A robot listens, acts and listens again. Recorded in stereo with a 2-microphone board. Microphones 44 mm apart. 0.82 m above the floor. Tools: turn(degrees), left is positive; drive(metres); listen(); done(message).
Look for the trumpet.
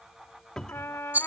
turn(degrees=70)
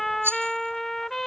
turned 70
turn(degrees=10)
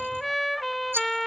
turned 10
done("Facing the trumpet.")